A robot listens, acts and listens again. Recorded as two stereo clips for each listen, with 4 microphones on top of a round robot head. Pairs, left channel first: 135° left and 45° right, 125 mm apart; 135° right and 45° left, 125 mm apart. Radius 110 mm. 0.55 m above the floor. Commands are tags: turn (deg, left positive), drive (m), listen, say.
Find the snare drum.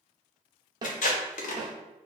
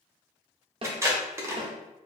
<say>Found it: a snare drum, straight ahead, 1 to 2 m away.</say>